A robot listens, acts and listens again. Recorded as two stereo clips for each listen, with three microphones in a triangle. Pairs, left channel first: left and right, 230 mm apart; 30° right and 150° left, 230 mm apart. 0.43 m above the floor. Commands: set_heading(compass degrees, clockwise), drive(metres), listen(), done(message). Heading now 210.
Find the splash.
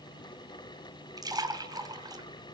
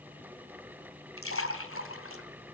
set_heading(225)
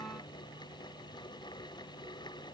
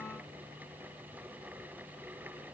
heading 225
done("I heard a splash from this way, but can't make it out now.")